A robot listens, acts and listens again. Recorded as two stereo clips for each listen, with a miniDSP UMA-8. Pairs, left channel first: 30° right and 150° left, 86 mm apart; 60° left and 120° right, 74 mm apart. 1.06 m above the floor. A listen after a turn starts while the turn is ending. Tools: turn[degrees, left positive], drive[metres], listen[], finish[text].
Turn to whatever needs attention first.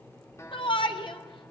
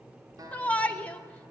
Thought: The shout: 10° right.
Action: turn[-10]
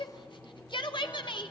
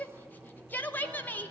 Action: finish[Found it: a shout, straight ahead, 2 to 4 m away.]